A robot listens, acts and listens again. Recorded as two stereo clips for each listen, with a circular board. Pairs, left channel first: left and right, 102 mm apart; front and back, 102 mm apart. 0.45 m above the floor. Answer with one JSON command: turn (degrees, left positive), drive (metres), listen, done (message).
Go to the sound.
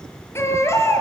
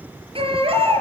{"turn": 155}
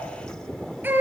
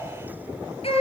{"turn": -20}
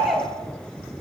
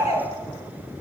{"drive": 1.0}
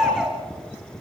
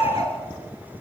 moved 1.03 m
{"drive": 1.0}
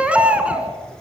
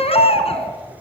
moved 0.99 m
{"turn": -10}
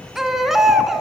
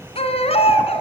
{"drive": 1.0}
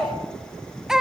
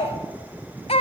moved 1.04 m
{"drive": 1.0}
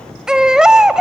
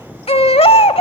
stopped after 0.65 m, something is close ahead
{"done": "Arrived at the baby crying, straight ahead."}